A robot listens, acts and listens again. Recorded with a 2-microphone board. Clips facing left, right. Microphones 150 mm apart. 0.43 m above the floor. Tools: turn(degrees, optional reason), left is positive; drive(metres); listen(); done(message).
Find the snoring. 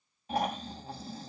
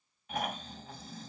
turn(degrees=30, reason="The snoring: about 30° left or 150° left.")
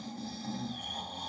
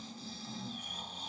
turn(degrees=120, reason="So it is at 120° left.")
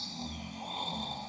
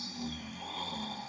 turn(degrees=25, reason="The snoring is now 25° left.")
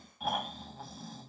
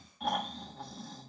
done("Facing the snoring, 2 to 4 m away.")